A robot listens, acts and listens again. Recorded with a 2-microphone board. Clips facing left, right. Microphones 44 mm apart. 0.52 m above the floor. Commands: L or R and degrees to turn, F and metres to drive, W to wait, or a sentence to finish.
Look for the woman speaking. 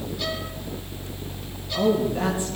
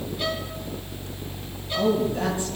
L30
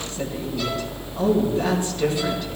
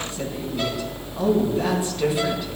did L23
Found it: a woman speaking, straight ahead.